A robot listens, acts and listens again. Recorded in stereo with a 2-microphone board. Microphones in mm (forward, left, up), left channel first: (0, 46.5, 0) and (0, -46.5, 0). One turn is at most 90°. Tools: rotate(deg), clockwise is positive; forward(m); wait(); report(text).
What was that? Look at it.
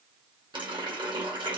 rotate(60)
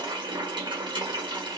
rotate(55)
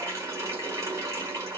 rotate(30)
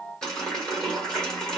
rotate(-10)
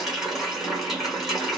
report("Facing the running tap.")